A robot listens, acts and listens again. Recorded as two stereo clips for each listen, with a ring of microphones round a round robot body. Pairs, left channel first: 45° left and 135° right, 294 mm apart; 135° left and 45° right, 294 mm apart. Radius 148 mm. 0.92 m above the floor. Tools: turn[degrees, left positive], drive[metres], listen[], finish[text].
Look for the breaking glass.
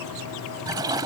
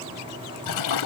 Action: listen[]
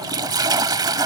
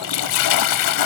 Action: listen[]
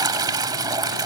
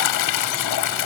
Action: finish[I can't make out breaking glass, only a toilet flushing.]